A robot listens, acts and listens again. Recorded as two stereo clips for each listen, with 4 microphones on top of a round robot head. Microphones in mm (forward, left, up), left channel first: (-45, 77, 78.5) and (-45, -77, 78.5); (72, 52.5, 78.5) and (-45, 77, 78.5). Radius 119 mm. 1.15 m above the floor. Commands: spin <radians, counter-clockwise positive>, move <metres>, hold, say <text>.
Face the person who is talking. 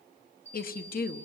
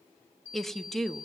spin 1.31
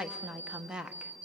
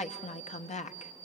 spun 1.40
say Facing the woman speaking, 1 to 2 m away.